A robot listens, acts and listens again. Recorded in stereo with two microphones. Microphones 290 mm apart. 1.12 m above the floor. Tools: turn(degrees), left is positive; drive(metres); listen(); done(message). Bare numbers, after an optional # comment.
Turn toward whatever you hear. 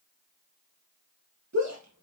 # The shout: about 65° right or 115° right.
turn(-65)
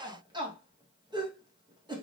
# So it is at 15° right.
turn(-15)
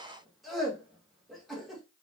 done("Found it: a shout, straight ahead, 1 to 2 m away.")